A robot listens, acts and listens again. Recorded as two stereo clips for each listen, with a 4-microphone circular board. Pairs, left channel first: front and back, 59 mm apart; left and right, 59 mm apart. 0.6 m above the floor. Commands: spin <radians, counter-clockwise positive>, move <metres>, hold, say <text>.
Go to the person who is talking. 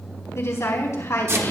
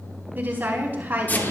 spin -0.61
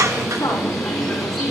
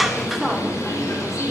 hold
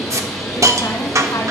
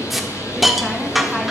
hold
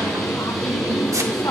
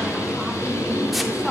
say Facing where the woman speaking came from. I can't hear it now. I did not reach it.